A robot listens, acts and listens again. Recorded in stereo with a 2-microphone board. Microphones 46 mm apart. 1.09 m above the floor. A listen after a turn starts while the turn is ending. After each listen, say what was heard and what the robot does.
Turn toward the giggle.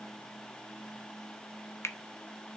Keep listening.
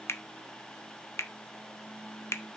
Keep listening.
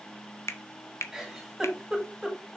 Turn 30° right.
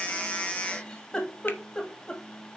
So it is at 20° left. Turn 20° left.
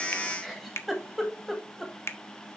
Facing the giggle, 2 to 4 m away.